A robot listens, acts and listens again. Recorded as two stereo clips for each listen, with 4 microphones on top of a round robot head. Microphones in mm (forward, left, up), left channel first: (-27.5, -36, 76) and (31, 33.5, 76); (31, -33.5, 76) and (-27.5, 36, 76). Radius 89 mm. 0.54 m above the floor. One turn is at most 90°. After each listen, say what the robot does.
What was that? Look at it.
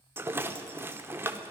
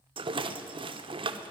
Turn 90° left.
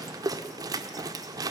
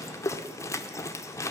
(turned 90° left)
Facing the rattle.